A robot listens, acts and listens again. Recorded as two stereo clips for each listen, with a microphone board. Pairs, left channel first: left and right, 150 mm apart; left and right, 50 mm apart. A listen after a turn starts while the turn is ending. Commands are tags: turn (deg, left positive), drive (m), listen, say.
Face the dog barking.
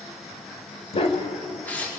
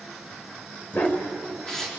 <turn deg="40"/>
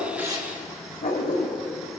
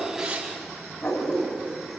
<turn deg="100"/>
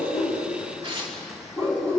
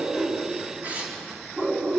<turn deg="-25"/>
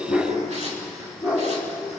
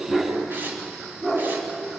<turn deg="-10"/>
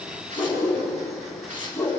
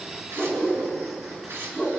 <say>Found it: a dog barking, straight ahead.</say>